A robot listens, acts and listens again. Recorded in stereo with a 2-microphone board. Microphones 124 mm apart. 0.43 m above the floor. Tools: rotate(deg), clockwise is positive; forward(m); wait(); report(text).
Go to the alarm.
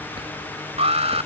rotate(55)
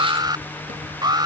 rotate(40)
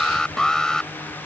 forward(1.0)
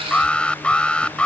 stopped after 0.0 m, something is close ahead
rotate(-10)
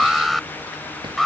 report("Blocked. The alarm is further on, straight ahead.")